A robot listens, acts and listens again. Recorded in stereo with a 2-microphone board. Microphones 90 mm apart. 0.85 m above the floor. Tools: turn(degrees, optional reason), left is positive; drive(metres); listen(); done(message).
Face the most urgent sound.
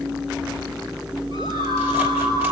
turn(degrees=-60, reason="The scream: about 60° right or 120° right.")
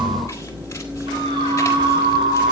turn(degrees=-60, reason="So it is at 60° right.")
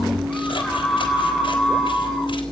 done("Found it: a scream, straight ahead.")